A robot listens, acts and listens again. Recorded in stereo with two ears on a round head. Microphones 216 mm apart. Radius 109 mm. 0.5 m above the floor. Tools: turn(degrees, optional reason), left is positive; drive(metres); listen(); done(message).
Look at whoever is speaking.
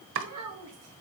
turn(degrees=-70, reason="The child speaking: about 70° right or 110° right.")
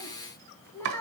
turn(degrees=10, reason="So it is at 10° left.")
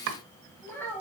turn(degrees=10, reason="The child speaking is now 10° left.")
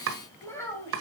turn(degrees=15, reason="The child speaking is now 15° left.")
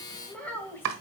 turn(degrees=10, reason="The child speaking is now 10° left.")
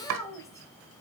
turn(degrees=15, reason="The child speaking is now 15° left.")
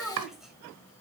done("Found it: a child speaking, straight ahead, 2 to 4 m away.")